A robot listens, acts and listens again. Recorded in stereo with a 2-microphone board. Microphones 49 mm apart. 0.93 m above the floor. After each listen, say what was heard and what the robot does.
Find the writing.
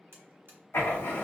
The writing: about 55° left or 125° left. Turn 55° left.
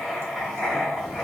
Facing the writing, 1 to 2 m away.